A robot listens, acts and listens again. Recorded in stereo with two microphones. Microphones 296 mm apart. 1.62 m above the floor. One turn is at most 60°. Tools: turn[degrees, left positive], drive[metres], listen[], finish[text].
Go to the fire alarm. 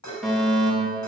Action: turn[30]
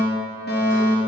Thought: So it is at 145° left.
Action: turn[60]
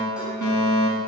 Thought: The fire alarm is now 100° left.
Action: turn[60]
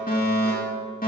Thought: The fire alarm is now 30° left.
Action: turn[30]
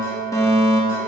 Thought: The fire alarm is now 10° left.
Action: turn[10]
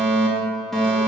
Action: drive[1.0]
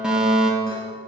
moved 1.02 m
Action: drive[1.0]
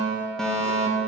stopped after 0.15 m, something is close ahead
Action: finish[Blocked. The fire alarm is further on, straight ahead.]